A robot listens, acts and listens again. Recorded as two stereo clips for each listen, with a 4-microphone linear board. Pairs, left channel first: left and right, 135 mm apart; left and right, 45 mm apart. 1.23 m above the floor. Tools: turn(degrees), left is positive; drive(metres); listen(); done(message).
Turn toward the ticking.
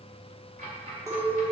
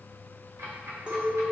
turn(degrees=-90)
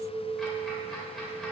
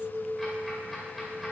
listen()
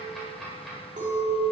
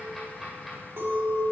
done("Found it: ticking, straight ahead, 2 to 4 m away.")